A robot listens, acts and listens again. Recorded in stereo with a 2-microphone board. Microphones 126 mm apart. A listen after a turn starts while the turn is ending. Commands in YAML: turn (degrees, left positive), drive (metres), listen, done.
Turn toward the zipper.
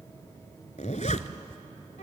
turn: 70
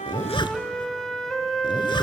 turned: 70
turn: 40
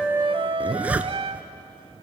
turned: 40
turn: -10
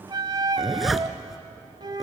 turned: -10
done: "Found it: a zipper, straight ahead."